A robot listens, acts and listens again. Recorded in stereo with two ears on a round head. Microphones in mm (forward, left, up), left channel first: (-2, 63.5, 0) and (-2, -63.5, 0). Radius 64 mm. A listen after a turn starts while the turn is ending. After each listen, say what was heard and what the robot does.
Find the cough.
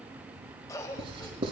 The cough: about 25° left or 155° left. Turn 25° left.
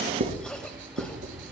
So it is at 10° left. Turn 10° left.
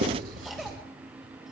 Facing the cough, 2 to 4 m away.